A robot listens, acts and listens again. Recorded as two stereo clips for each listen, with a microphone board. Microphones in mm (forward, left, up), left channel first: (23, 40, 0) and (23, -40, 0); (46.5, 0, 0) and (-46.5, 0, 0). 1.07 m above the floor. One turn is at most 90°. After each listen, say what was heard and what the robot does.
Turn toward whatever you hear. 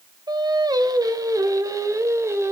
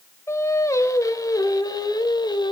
The singing: 35° right. Turn 35° right.
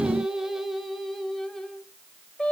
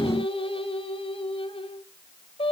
The singing is now 15° left. Turn 15° left.
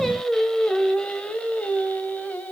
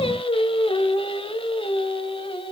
The singing is now 15° left. Turn 15° left.
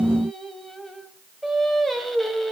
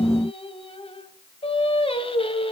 Found it: singing, straight ahead.